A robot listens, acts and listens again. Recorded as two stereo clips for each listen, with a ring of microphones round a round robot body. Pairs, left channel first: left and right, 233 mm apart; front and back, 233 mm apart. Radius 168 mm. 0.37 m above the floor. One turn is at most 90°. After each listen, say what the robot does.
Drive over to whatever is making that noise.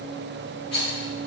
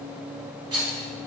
Turn 90° left.
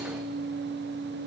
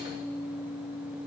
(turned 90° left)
Turn 75° left.
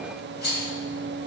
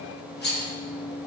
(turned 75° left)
Turn 45° left.
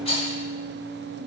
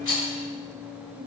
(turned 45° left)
Turn 25° left.
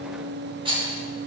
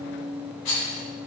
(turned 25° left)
Turn 20° right.
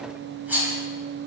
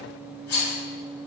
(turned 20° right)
Turn 10° right.
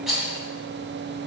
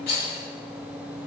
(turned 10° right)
Drive 1.0 m forward.
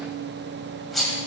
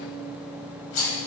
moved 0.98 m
Drive 1.0 m forward.
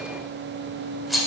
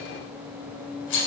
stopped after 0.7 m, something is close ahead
Arrived at the rattle, straight ahead.